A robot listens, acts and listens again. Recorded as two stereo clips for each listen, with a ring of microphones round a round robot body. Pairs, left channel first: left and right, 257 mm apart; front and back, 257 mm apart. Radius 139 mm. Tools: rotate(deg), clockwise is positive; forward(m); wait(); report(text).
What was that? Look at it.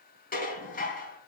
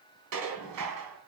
rotate(-145)
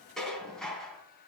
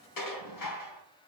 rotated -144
report("Found it: dishes clattering, straight ahead, 2 to 4 m away.")